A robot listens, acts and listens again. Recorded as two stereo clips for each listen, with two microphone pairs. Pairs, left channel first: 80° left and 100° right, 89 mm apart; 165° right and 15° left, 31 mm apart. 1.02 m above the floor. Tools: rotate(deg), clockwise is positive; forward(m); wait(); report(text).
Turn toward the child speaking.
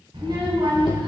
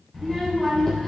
rotate(95)
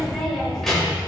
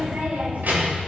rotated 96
rotate(10)
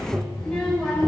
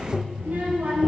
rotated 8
report("Facing the child speaking, 2 to 4 m away.")